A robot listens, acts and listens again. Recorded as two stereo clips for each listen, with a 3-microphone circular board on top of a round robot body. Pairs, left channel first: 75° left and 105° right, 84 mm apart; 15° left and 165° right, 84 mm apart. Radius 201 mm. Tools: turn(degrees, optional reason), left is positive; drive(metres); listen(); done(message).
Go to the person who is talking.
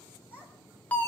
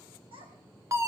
turn(degrees=180, reason="The child speaking: straight behind.")
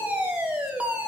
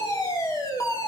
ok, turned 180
listen()
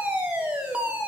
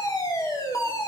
listen()
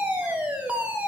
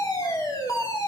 done("Facing where the child speaking came from. I can't hear it now. I did not reach it.")